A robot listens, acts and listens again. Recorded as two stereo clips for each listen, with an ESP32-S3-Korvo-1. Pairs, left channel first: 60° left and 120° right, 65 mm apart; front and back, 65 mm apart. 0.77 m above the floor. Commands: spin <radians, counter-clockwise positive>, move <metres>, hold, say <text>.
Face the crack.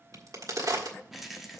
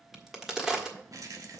spin -1.66
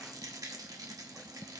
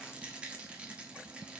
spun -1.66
say I heard a crack from this way, but can't make it out now.